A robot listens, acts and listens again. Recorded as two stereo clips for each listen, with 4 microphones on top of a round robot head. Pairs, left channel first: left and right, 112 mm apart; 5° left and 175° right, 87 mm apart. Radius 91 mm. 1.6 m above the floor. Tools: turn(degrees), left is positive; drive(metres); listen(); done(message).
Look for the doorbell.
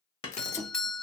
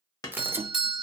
turn(degrees=170)
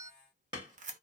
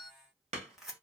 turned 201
turn(degrees=-30)
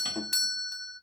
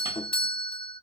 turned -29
done("Found it: a doorbell, straight ahead.")